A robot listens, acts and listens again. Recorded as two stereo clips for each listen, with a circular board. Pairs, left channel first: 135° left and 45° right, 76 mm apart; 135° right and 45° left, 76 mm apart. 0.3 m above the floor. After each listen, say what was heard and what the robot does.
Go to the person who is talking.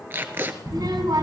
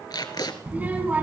The child speaking: 25° right. Turn 25° right.
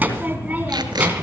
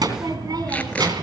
The child speaking is now 20° left. Turn 20° left.
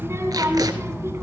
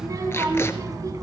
Drive 1.0 m forward.
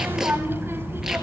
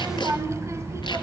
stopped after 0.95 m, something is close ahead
Arrived at the child speaking, straight ahead.